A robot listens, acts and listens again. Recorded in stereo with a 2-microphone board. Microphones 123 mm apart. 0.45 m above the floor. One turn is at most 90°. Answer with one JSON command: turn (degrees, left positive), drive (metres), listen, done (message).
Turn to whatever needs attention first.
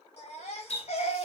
{"turn": 60}
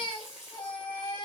{"turn": 45}
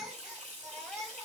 {"done": "Facing the baby crying, 1 to 2 m away."}